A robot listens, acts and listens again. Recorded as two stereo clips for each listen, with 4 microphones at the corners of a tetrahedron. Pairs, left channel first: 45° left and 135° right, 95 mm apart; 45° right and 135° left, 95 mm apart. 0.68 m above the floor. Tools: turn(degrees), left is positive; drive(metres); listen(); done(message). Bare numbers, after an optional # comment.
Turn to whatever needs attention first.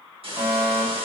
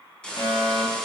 # The fire alarm: 80° right.
turn(-80)
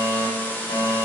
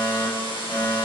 # The fire alarm is now 25° left.
turn(25)
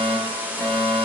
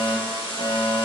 # The fire alarm is now 20° right.
turn(-20)
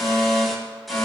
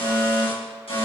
done("Found it: a fire alarm, straight ahead, over 4 m away.")